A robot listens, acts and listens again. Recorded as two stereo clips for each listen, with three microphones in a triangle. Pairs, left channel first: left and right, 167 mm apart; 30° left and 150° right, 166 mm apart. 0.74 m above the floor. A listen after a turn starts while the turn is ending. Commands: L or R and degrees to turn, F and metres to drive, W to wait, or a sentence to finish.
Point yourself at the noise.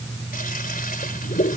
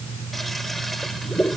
L120
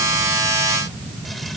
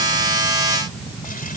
W
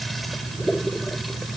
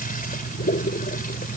Found it: a toilet flushing, straight ahead.